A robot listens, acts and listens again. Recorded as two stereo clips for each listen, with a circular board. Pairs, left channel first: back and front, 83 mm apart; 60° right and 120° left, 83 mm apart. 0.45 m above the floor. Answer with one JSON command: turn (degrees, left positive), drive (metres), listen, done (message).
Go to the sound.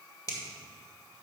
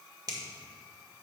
{"turn": 145}
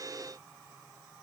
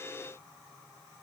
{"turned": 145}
{"listen": true}
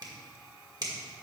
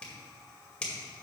{"turn": 15}
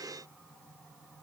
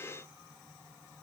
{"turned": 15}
{"listen": true}
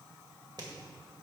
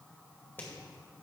{"drive": 1.0}
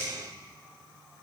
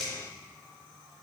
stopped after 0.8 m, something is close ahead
{"listen": true}
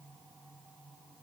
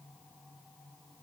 {"listen": true}
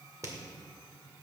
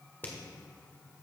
{"done": "Arrived at the finger snap, straight ahead."}